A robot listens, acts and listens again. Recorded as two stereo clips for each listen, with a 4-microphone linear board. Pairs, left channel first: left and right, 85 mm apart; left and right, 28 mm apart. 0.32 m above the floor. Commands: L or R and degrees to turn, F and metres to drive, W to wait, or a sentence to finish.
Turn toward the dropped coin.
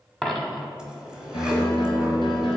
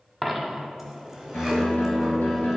L30
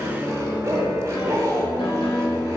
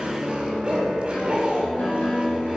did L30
W
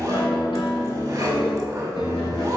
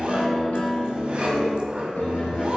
I heard a dropped coin, but can't make it out now. It was about 25° right or 145° left.